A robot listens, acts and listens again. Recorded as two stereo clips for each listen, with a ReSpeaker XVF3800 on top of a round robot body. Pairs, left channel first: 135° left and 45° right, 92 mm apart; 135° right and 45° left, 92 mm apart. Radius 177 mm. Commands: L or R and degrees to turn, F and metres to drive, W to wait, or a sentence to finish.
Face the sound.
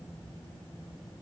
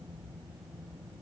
W
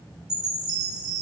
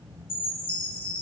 R125
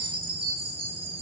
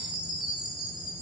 R35
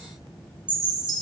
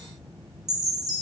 Facing the chime.